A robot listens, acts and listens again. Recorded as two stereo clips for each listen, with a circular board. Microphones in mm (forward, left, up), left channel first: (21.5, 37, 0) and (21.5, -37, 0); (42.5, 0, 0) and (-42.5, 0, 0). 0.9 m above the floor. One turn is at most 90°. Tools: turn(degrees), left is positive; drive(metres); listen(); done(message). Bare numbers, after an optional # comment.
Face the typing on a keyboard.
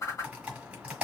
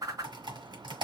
# The typing on a keyboard: 165° right.
turn(-90)
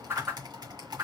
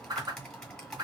# The typing on a keyboard is now 85° right.
turn(-85)
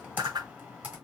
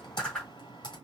# The typing on a keyboard is now 20° right.
turn(-20)
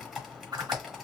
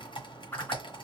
done("Facing the typing on a keyboard, 1 to 2 m away.")